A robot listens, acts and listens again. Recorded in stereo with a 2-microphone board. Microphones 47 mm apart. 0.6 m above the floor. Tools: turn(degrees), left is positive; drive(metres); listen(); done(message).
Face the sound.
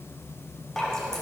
turn(degrees=30)
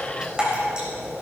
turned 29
turn(degrees=-20)
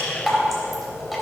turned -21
done("Found it: dripping, straight ahead, 2 to 4 m away.")